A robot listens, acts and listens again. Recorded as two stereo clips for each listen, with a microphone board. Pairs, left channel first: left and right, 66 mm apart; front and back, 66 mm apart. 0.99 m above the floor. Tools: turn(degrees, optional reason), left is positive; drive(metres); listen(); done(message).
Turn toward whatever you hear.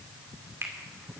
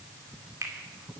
turn(degrees=-140, reason="The finger snap: 140° right.")
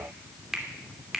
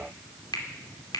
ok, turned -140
done("Found it: a finger snap, straight ahead.")